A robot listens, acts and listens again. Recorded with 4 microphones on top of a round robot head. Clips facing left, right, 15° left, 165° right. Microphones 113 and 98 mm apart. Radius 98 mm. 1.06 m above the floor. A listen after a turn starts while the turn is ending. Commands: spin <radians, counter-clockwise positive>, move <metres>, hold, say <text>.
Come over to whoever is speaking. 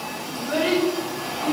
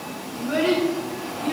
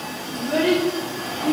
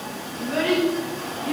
move 1.0
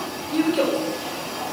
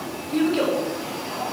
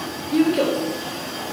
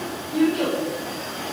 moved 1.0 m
move 1.0
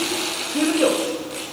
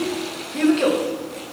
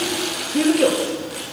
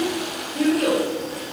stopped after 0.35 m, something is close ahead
spin 0.17
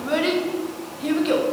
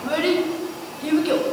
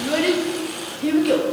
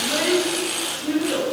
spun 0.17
say Arrived at the child speaking, straight ahead.